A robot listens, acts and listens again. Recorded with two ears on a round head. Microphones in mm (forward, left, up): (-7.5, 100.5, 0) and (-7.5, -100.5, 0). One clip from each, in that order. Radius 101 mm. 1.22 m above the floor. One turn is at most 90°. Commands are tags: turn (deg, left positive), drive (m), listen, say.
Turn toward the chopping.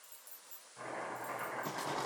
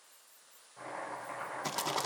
<turn deg="30"/>
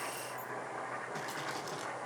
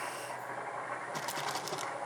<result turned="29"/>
<turn deg="-20"/>
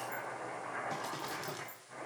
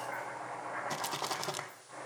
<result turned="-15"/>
<say>Facing the chopping.</say>